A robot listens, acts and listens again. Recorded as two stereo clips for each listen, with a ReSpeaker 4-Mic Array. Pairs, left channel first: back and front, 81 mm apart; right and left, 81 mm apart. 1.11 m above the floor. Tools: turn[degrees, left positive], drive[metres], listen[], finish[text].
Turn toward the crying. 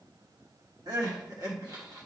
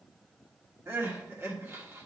Thought: The crying: 35° left.
Action: turn[35]
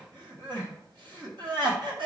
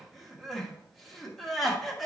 Action: finish[Facing the crying.]